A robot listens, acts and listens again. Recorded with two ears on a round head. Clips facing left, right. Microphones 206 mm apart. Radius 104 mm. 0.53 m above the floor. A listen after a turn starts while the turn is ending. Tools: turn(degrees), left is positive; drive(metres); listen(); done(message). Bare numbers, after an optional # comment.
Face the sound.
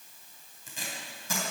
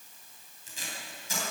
# The tape being pulled: about 45° left or 135° left.
turn(45)
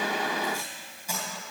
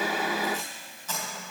# So it is at 10° left.
turn(10)
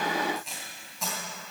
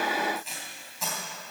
done("Found it: tape being pulled, straight ahead.")